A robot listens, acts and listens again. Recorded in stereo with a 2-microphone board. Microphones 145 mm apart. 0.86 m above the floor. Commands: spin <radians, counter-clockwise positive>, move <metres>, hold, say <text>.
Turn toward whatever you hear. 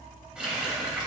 spin -0.52
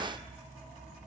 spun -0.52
hold
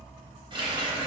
spin -2.53
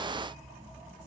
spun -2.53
hold
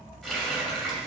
say Found it: a running tap, straight ahead.